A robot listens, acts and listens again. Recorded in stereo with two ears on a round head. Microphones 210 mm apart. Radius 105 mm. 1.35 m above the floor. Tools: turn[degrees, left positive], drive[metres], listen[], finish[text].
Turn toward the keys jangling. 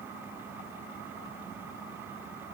Action: listen[]
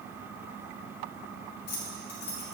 Thought: The keys jangling: about 65° left or 115° left.
Action: turn[65]
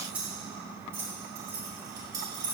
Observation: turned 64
Thought: So it is at 15° right.
Action: turn[-15]
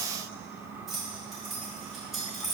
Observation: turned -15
Action: finish[Found it: keys jangling, straight ahead, 2 to 4 m away.]